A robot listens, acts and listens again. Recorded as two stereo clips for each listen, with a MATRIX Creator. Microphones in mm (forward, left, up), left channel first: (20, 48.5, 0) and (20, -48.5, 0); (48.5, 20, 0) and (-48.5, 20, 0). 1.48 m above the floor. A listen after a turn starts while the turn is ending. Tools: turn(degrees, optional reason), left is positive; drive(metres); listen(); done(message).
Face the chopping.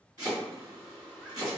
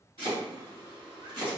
turn(degrees=-140, reason="The chopping: 140° right.")
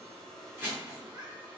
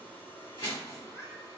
turn(degrees=-20, reason="The chopping is now 20° right.")
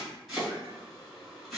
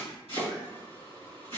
done("Facing the chopping.")